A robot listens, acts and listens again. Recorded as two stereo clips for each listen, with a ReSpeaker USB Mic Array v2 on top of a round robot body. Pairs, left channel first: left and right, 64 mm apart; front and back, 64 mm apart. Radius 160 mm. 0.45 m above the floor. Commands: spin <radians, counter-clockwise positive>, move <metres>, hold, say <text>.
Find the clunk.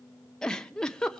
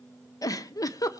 hold
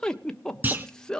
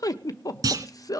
spin -2.62
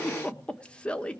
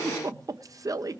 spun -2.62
say Facing where the clunk came from. I can't hear it now.